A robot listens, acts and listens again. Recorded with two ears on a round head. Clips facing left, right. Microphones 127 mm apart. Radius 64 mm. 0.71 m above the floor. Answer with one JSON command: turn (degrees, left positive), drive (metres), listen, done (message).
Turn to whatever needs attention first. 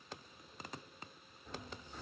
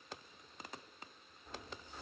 {"listen": true}
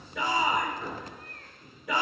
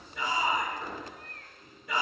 {"turn": 60}
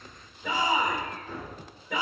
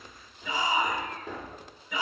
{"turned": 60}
{"turn": 45}
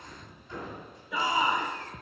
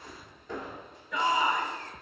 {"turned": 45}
{"done": "Found it: a shout, straight ahead, 2 to 4 m away."}